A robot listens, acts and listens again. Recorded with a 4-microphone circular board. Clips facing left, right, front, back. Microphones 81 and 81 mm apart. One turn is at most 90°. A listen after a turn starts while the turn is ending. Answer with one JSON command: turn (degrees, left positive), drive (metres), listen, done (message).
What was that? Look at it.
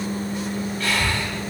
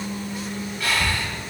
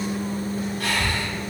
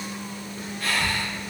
{"turn": -10}
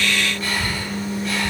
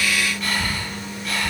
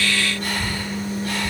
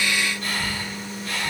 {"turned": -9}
{"done": "Facing the breathing."}